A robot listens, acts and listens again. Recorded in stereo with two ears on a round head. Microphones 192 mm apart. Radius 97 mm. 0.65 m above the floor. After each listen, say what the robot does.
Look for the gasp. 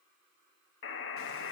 Keep listening.
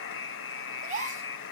Turn 30° right.
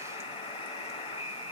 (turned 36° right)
Keep listening.
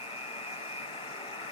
I heard a gasp, but can't make it out now. It was about 5° left or 110° right.